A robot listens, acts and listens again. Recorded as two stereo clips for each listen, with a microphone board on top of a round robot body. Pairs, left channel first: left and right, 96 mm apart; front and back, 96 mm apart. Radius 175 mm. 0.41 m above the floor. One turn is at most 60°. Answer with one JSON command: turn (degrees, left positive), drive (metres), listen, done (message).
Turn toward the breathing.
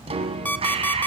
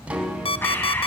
{"turn": -60}
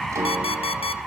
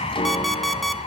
{"done": "Found it: breathing, straight ahead."}